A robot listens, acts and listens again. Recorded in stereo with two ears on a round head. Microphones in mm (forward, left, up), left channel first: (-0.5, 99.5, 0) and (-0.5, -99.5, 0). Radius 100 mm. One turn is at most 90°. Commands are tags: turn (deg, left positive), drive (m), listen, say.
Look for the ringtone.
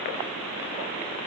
<listen/>
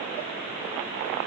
<listen/>
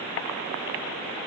<say>I can't make out a ringtone to turn to.</say>